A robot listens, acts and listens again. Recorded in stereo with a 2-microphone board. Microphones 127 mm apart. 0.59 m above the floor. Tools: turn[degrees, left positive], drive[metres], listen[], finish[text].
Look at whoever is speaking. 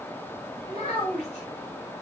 Thought: The child speaking: about 60° left or 120° left.
Action: turn[60]
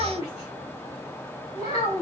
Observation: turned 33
Thought: So it is at 70° left.
Action: turn[70]
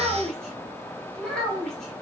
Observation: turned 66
Action: finish[Facing the child speaking.]